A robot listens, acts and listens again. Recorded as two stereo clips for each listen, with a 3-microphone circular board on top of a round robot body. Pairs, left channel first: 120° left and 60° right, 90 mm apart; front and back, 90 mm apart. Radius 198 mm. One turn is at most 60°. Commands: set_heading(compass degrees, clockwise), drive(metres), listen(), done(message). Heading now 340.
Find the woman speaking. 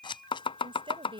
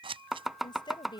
set_heading(15)
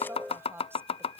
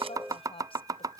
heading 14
done("Facing the woman speaking.")